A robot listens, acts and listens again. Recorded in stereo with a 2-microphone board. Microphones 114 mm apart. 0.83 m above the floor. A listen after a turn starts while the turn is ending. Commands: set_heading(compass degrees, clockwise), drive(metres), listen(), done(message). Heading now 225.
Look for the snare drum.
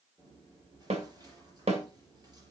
set_heading(295)
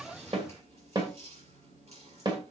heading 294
set_heading(334)
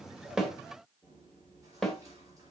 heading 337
done("Found it: a snare drum, straight ahead, 1 to 2 m away.")